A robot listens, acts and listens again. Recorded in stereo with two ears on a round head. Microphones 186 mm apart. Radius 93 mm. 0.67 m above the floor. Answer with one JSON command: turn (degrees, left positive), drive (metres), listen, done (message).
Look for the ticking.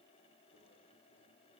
{"listen": true}
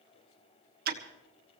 {"turn": -45}
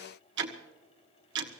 {"turn": -80}
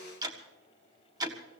{"turn": -20}
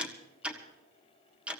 {"done": "Found it: ticking, straight ahead, 1 to 2 m away."}